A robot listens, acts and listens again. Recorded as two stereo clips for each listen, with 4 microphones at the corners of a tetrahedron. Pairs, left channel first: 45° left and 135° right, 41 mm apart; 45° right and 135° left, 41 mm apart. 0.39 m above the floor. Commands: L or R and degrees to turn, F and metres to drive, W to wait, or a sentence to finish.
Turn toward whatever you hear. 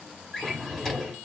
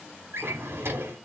L125
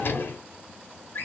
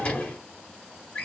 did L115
L15
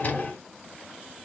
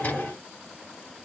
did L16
Facing the drawer.